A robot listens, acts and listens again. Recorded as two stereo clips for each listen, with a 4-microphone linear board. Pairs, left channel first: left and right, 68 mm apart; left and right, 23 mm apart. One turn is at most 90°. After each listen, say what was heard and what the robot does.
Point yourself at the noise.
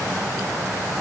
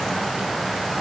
Keep listening.
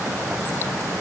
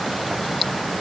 Keep listening.
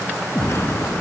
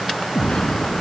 The explosion: about 40° left or 140° left. Turn 40° left.
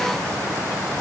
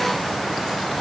Keep listening.
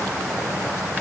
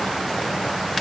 I heard an explosion, but can't make it out now. It was about straight ahead or 100° left.